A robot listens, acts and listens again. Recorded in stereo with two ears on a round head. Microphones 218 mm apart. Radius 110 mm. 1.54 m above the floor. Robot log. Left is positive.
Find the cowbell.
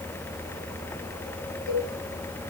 note: The cowbell: about 65° left or 115° left.
cmd yaw +65
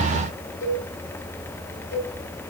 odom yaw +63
note: So it is at 55° left.
cmd yaw +55
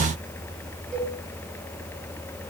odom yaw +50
end: Facing the cowbell.